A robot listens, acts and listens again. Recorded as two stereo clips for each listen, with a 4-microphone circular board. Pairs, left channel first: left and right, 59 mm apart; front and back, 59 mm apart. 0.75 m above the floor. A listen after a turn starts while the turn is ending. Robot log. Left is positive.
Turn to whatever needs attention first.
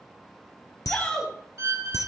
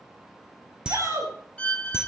note: The shout: 155° left.
cmd yaw +155
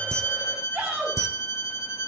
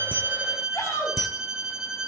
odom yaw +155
note: The shout is now 35° right.
cmd yaw -35
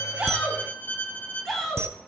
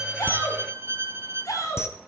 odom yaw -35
end: Found it: a shout, straight ahead, over 4 m away.